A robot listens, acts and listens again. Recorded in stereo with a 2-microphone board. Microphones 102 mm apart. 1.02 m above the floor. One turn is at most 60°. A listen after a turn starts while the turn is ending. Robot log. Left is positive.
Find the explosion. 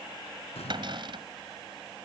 cmd yaw +60
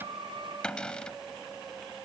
note: Nothing new. It was at 30° left.
cmd yaw +30
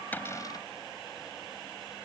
end: Facing where the explosion came from. I can't hear it now.